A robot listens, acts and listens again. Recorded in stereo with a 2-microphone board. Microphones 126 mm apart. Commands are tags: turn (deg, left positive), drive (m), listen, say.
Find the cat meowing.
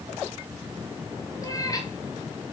<turn deg="30"/>
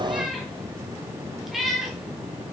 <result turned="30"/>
<say>Found it: a cat meowing, straight ahead, over 4 m away.</say>